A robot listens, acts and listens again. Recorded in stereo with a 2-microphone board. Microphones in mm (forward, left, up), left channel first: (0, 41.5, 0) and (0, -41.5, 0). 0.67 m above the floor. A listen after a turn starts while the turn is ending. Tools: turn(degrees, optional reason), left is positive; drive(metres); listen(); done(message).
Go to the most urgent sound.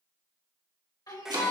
turn(degrees=50, reason="The shout: about 50° left or 130° left.")
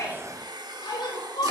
turn(degrees=75, reason="So it is at 75° left.")
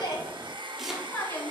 turn(degrees=25, reason="The shout is now 25° left.")
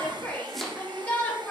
turn(degrees=15, reason="The shout is now 15° left.")
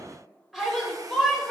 drive(metres=1.0)
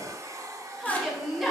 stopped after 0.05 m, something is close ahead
done("Blocked. The shout is further on, straight ahead.")